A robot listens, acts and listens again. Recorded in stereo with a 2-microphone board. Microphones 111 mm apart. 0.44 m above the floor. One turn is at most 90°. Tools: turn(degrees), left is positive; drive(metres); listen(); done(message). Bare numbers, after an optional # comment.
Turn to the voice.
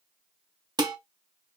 listen()
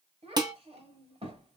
# The child speaking: about 60° right or 120° right.
turn(-60)
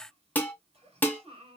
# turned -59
# So it is at 60° right.
turn(-60)
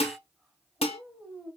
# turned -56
done("Facing the child speaking.")